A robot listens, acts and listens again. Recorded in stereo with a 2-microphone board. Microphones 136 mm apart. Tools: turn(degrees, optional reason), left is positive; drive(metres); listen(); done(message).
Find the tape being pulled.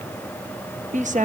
listen()
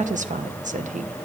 listen()
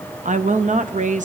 done("I can't make out tape being pulled to turn to.")